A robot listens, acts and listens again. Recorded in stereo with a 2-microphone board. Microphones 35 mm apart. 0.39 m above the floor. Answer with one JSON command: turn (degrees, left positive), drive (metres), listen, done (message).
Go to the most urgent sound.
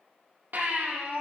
{"turn": -65}
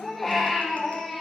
{"drive": 1.0}
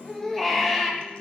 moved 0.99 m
{"drive": 1.0}
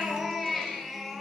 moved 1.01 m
{"drive": 1.0}
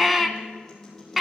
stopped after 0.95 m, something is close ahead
{"done": "Arrived at the baby crying, straight ahead."}